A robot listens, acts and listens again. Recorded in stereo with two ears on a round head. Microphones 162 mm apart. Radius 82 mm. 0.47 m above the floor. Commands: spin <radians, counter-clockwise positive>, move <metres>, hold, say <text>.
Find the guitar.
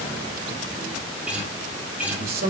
spin -0.52
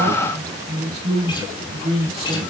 hold
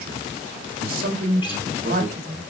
spin 0.44
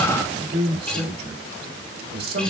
say Found it: a guitar, straight ahead.